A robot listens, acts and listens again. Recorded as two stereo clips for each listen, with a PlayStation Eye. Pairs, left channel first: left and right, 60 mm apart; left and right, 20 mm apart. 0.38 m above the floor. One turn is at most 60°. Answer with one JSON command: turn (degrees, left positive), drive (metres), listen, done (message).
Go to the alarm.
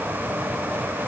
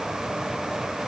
{"listen": true}
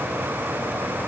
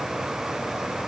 {"listen": true}
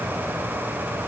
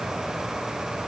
{"done": "I can't make out an alarm."}